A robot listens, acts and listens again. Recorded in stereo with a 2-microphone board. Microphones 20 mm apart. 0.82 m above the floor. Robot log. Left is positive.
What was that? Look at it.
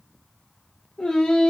cmd yaw +90
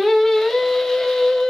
note: So it is at 40° left.
cmd yaw +40
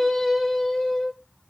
note: The singing is now 25° left.
cmd yaw +25
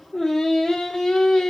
note: The singing is now 35° left.
cmd yaw +35
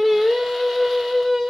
note: The singing is now 15° right.
cmd yaw -15
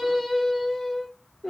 end: Found it: singing, straight ahead.